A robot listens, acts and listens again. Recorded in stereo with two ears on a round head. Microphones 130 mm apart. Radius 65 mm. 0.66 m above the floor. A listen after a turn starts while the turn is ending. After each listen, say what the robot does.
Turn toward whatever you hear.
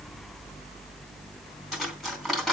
Turn 30° left.
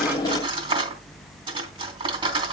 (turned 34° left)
Turn 35° right.
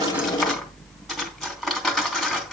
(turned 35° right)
Found it: cutlery clinking, straight ahead, 2 to 4 m away.